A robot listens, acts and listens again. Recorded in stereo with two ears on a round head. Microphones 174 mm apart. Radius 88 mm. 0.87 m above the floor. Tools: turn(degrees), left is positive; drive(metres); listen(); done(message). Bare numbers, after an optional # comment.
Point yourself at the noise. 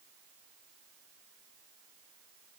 listen()
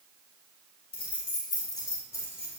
turn(30)
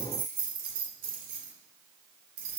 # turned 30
# So it is at 45° right.
turn(-45)
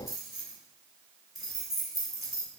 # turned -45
done("Facing the keys jangling, 2 to 4 m away.")